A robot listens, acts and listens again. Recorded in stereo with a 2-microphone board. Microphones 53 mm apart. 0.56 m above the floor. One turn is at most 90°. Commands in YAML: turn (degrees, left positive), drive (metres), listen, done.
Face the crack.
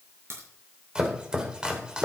turn: -55
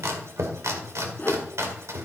listen: true
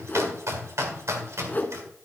done: "I heard a crack, but can't make it out now. It was about straight ahead or 70° right."